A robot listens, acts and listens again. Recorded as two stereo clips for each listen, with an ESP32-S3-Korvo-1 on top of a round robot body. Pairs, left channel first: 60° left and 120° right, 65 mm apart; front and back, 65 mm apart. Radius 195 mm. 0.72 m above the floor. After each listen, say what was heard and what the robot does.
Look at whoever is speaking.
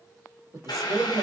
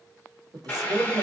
The woman speaking: 165° right. Turn 165° right.
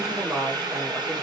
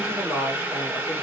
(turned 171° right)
Found it: a woman speaking, straight ahead, 1 to 2 m away.